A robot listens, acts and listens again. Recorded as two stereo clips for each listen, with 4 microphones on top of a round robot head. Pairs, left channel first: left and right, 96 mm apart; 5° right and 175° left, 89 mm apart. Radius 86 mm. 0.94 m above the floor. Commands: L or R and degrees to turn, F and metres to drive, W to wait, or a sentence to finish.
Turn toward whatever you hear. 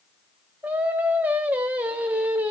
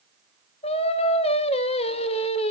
R10
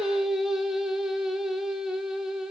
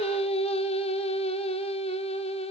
Found it: singing, straight ahead, under 1 m away.